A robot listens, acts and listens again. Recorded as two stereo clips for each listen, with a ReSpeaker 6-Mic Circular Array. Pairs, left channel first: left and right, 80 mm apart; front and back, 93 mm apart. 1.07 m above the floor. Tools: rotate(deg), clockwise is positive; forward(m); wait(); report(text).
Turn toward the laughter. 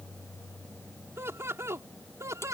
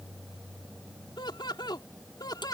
rotate(40)
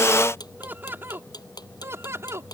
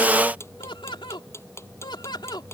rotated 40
rotate(35)
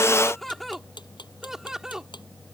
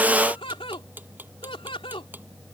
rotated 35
report("Facing the laughter.")